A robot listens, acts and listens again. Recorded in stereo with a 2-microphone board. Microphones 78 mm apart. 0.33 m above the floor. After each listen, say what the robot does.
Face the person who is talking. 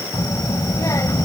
Turn 50° left.
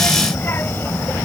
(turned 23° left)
Turn 40° left.
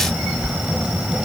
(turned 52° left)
Turn 15° right.
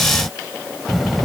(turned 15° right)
Found it: a child speaking, straight ahead.